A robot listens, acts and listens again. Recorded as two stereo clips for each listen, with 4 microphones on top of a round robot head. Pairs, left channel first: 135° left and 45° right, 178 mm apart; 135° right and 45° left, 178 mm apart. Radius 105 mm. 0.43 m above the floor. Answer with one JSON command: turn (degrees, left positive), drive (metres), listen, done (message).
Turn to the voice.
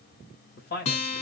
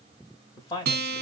{"turn": 155}
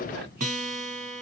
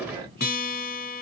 {"listen": true}
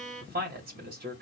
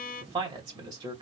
{"turn": -20}
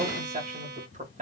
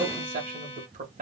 {"done": "Facing the man speaking, 2 to 4 m away."}